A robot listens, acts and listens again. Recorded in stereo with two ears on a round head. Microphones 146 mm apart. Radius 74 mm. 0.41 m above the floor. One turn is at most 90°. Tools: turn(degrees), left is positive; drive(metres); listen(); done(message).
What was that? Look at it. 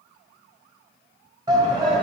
turn(degrees=-30)
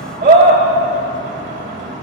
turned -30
turn(degrees=-90)
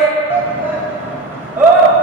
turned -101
turn(degrees=-15)
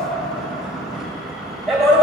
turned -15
done("Found it: a shout, straight ahead, 1 to 2 m away.")